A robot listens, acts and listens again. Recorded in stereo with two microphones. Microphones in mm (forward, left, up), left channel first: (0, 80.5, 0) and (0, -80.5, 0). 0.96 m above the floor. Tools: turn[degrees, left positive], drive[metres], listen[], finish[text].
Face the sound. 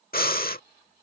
Thought: The breathing: about 60° left or 120° left.
Action: turn[60]
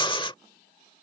Thought: So it is at 35° left.
Action: turn[35]
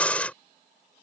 Thought: The breathing is now 10° left.
Action: turn[10]
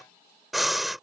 Action: finish[Facing the breathing.]